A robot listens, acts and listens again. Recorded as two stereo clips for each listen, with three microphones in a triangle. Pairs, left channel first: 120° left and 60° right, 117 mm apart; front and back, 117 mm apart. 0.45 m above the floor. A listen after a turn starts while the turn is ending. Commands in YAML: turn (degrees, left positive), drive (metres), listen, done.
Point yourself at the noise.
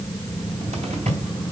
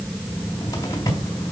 turn: -60
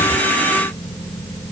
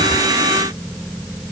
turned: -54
listen: true
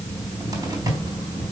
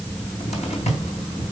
done: "Facing the cupboard door."